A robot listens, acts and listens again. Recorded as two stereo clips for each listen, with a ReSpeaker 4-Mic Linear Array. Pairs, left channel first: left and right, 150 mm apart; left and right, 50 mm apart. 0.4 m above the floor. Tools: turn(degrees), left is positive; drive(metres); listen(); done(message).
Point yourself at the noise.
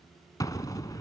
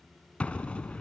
turn(degrees=20)
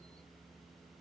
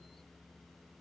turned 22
listen()
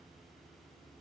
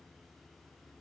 done("I heard an explosion, but can't make it out now. It was about straight ahead or 135° left.")